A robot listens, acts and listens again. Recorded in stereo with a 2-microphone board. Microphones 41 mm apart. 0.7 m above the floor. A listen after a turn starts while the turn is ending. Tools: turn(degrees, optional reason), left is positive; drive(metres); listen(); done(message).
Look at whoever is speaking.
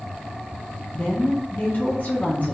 turn(degrees=45, reason="The woman speaking: about 45° left or 135° left.")
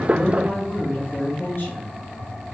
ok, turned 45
turn(degrees=80, reason="So it is at 80° left.")
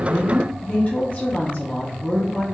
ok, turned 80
turn(degrees=45, reason="The woman speaking is now 45° left.")
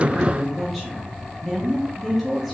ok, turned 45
done("Facing the woman speaking.")